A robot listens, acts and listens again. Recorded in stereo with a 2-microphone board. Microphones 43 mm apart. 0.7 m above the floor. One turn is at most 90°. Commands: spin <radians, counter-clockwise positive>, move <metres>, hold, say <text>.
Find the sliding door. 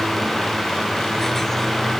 hold
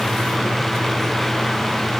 hold
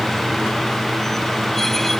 say I can't make out a sliding door.